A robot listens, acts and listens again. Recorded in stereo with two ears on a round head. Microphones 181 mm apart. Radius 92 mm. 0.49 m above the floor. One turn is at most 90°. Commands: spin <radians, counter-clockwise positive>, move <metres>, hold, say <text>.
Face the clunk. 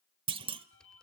spin -0.52
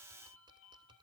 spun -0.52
hold
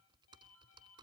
say I heard a clunk, but can't make it out now. It was about straight ahead or 120° right.